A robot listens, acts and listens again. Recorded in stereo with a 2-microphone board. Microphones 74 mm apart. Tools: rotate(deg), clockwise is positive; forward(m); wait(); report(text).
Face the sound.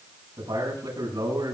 rotate(75)
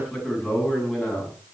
report("Found it: a man speaking, straight ahead.")